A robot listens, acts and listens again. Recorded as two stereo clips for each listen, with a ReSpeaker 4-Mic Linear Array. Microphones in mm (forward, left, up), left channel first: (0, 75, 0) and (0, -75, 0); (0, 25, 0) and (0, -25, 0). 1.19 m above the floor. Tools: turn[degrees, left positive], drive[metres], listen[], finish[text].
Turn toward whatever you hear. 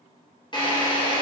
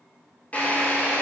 Thought: The drill: about 30° left or 150° left.
Action: turn[30]
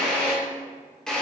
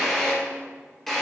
Action: finish[Facing the drill.]